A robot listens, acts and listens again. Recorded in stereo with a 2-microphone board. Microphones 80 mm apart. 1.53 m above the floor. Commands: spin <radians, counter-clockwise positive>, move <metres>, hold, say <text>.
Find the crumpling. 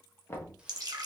hold
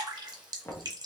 hold
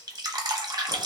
say I can't make out crumpling, only knocking and dripping.